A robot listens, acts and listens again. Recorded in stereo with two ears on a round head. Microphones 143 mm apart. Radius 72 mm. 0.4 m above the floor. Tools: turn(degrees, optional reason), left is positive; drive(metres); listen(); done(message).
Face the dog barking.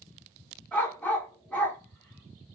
turn(degrees=30)
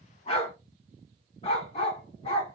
turn(degrees=140, reason="So it is at 140° left.")
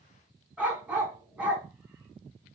turn(degrees=-10, reason="The dog barking is now 10° right.")
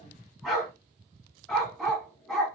done("Found it: a dog barking, straight ahead.")